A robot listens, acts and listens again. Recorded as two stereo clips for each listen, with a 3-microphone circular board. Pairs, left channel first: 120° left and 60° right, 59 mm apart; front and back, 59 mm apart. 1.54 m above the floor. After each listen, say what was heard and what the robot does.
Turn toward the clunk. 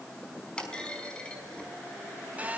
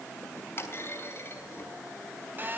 The clunk: 45° left. Turn 45° left.
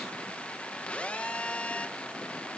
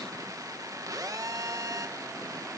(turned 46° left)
Facing where the clunk came from. I can't hear it now.